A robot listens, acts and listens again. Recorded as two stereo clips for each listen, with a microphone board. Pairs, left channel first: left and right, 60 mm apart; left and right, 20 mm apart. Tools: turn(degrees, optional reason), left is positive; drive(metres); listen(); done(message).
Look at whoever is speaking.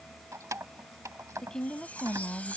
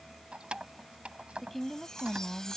turn(degrees=30)
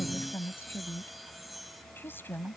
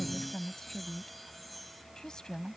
turn(degrees=140, reason="So it is at 140° left.")
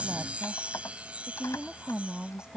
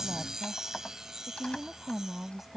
turn(degrees=-15, reason="The woman speaking is now 15° right.")
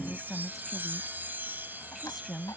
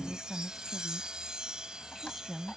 done("Found it: a woman speaking, straight ahead.")